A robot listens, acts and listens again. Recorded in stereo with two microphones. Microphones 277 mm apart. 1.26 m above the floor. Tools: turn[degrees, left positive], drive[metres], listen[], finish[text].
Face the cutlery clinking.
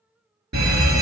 Action: listen[]
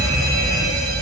Action: listen[]
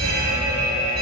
Action: finish[I can't make out cutlery clinking to turn to.]